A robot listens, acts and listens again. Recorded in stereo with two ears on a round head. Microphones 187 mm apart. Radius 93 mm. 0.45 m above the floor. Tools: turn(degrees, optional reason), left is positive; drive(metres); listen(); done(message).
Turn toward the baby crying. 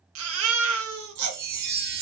turn(degrees=-70, reason="The baby crying: about 70° right or 110° right.")
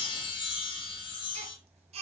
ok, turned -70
turn(degrees=-30, reason="So it is at 30° right.")
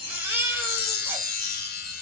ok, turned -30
turn(degrees=-10, reason="The baby crying is now 10° right.")
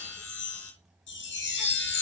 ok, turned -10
listen()
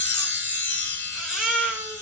done("Found it: a baby crying, straight ahead.")